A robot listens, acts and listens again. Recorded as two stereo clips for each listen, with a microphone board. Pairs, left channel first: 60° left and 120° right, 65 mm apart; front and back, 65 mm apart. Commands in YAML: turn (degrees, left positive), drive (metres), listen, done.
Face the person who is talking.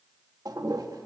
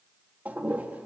listen: true
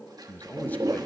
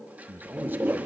turn: 120
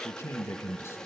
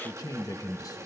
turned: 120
turn: 15
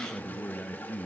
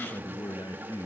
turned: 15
done: "Found it: a man speaking, straight ahead, 1 to 2 m away."